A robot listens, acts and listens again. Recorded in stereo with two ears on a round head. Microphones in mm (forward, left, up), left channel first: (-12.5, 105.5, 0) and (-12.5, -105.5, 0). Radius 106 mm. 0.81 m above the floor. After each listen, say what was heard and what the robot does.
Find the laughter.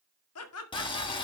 The laughter: about 70° left or 110° left. Turn 70° left.
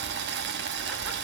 Keep listening.
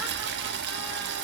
Keep listening.
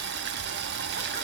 I heard laughter, but can't make it out now. It was about straight ahead or 40° left.